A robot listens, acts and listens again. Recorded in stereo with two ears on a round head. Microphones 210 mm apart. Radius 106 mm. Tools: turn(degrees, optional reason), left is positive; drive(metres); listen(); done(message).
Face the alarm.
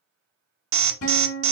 turn(degrees=-60, reason="The alarm: about 60° right or 120° right.")
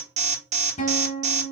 turn(degrees=-35, reason="So it is at 35° right.")
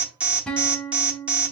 done("Facing the alarm.")